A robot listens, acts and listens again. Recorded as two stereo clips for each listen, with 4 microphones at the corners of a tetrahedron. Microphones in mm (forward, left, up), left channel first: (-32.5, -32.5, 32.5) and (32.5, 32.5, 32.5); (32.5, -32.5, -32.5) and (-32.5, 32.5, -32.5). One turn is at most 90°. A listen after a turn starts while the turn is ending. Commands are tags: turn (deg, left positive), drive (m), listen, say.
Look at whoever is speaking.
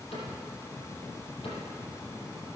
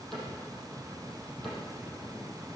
<listen/>
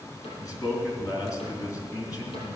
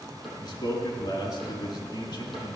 <turn deg="-85"/>
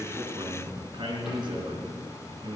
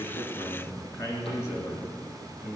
<turn deg="10"/>
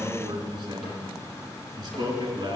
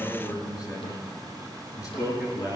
<say>Found it: a man speaking, straight ahead.</say>